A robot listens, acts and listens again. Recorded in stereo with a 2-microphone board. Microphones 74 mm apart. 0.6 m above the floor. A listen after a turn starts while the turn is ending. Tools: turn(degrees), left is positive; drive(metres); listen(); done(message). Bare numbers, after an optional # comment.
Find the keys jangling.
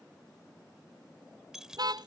turn(-30)
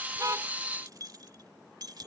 # So it is at 115° right.
turn(-115)
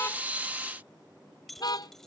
done("Found it: keys jangling, straight ahead.")